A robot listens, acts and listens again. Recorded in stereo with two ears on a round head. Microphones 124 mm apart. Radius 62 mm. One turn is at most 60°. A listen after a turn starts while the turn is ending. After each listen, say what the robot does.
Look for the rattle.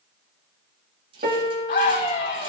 Turn 40° right.
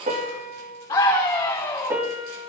Keep listening.
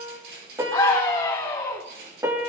Turn 60° right.
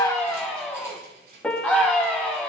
Turn 60° right.
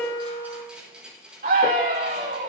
Facing the rattle.